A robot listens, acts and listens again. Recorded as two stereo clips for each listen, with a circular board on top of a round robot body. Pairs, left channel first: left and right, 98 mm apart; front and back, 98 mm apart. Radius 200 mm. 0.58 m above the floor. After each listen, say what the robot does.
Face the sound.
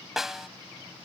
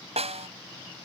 Turn 175° right.
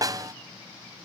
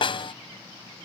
Turn 35° right.
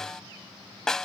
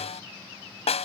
Facing the snare drum.